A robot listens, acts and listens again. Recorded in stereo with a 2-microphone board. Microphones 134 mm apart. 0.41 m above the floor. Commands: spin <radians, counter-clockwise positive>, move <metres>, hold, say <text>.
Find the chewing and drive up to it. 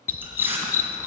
spin -0.52
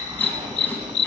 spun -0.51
hold
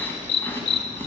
hold
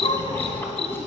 say I heard chewing, but can't make it out now. It was about 15° left or 140° right. I did not reach it.